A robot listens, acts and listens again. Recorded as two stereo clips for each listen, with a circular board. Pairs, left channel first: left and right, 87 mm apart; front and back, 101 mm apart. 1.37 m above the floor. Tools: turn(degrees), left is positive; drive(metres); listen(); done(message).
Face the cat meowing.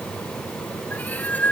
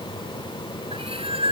turn(degrees=160)
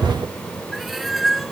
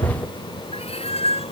done("Found it: a cat meowing, straight ahead.")